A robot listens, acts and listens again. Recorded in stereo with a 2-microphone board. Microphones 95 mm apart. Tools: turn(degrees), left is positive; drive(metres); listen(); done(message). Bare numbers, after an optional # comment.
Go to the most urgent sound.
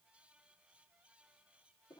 listen()
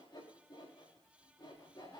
listen()
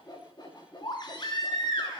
# The baby crying: about 45° left or 135° left.
turn(45)
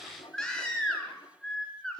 drive(1.0)
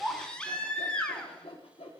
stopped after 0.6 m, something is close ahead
# The baby crying is now 10° left.
turn(10)
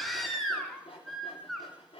done("Something is in my way. I am facing the baby crying but have not reached it.")